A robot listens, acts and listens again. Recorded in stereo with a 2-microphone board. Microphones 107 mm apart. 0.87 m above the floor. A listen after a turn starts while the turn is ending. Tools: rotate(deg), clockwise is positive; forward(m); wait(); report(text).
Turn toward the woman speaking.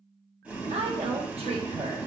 rotate(90)
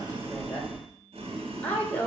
rotate(-20)
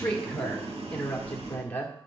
rotate(-20)
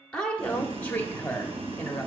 rotate(-15)
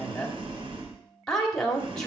report("Facing the woman speaking, 1 to 2 m away.")